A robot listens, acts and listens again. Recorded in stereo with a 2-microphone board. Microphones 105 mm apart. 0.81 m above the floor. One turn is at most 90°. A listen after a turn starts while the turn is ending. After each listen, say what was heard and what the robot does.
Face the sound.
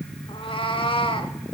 The cat meowing: about 55° left or 125° left. Turn 55° left.
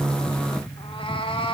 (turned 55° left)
So it is at 65° left. Turn 65° left.
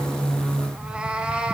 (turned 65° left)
The cat meowing is now 10° right. Turn 10° right.
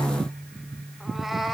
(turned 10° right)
Found it: a cat meowing, straight ahead, 1 to 2 m away.